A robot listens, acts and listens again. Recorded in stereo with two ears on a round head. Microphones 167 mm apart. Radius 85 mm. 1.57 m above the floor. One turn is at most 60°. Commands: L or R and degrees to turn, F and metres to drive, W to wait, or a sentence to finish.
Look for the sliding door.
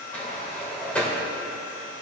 L30
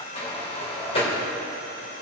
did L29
L60
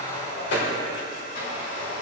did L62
L60
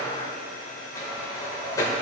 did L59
L20
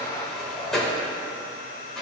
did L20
Found it: a sliding door, straight ahead, 2 to 4 m away.